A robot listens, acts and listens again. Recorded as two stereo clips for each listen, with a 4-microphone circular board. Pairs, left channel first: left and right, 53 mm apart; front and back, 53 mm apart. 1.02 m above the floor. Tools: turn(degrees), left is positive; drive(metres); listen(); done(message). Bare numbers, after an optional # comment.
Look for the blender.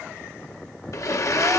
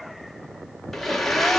# The blender: 85° left.
turn(85)
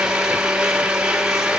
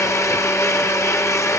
# The blender is now 15° right.
turn(-15)
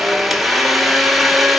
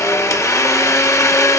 done("Facing the blender, 1 to 2 m away.")